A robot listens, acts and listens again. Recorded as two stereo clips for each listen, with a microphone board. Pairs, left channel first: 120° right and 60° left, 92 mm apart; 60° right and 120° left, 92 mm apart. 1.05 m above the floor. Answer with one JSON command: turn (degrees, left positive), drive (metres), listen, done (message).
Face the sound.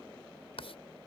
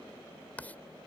{"turn": -135}
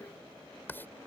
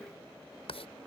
{"turn": -50}
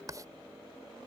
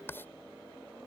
{"done": "Facing the writing."}